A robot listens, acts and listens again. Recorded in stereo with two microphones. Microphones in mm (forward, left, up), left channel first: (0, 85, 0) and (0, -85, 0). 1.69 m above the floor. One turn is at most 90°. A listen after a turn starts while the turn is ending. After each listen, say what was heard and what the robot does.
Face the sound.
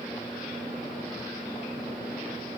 Keep listening.
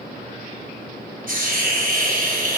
The hiss: about 55° right or 125° right. Turn 55° right.
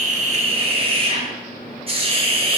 So it is at 45° right. Turn 45° right.
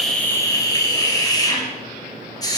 The hiss is now 25° left. Turn 25° left.
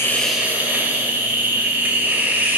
The hiss is now 10° right. Turn 10° right.
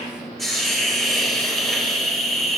Facing the hiss.